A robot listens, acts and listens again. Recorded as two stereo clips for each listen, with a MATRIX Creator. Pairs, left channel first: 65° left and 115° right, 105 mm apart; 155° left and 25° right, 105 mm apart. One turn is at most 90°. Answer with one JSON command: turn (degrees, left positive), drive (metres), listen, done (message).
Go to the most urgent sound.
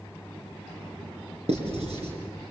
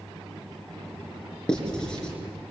{"listen": true}
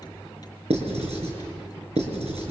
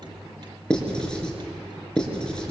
{"listen": true}
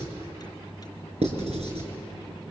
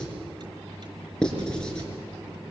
{"done": "I can't make out anything urgent, only writing."}